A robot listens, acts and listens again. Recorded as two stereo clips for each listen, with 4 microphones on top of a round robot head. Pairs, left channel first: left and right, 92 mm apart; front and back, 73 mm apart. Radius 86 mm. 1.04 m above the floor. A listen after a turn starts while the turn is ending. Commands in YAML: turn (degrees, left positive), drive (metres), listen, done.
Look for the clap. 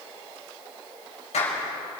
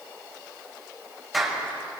turn: 90
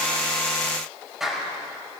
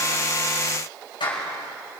done: "Facing the clap, over 4 m away."